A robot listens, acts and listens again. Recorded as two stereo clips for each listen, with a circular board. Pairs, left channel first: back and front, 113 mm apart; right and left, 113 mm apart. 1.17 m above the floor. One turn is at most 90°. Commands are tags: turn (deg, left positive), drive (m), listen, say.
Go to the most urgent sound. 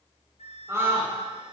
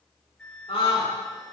<turn deg="-65"/>
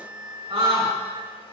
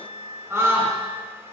<turn deg="30"/>
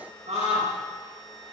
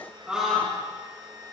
<turn deg="10"/>
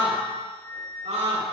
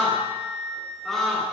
<drive m="1.0"/>
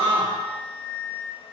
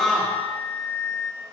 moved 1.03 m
<drive m="1.0"/>
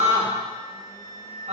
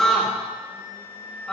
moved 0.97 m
<drive m="1.0"/>
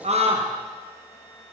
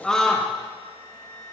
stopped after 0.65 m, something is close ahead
<say>I am next to the scream.</say>